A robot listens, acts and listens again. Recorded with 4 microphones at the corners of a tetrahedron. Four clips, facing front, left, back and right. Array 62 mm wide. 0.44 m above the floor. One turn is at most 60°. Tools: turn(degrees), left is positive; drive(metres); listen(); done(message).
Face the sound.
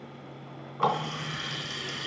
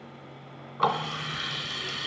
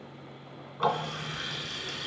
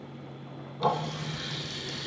turn(degrees=60)
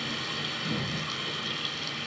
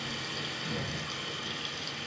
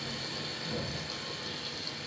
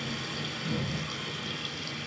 done("Facing the running tap, 2 to 4 m away.")